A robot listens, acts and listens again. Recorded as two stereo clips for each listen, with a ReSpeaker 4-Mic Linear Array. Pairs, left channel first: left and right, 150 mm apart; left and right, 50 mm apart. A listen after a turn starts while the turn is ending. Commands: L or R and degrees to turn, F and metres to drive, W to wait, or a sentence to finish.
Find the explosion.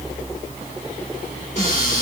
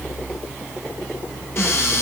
W
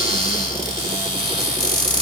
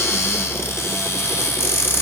W
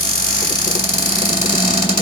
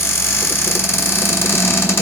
I can't make out an explosion to turn to.